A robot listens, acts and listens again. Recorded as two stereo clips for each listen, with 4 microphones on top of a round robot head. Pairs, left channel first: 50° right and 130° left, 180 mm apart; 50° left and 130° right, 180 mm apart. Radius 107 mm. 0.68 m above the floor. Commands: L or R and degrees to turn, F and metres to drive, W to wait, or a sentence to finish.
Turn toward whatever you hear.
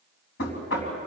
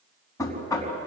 R20
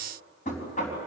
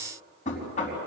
Found it: knocking, straight ahead, over 4 m away.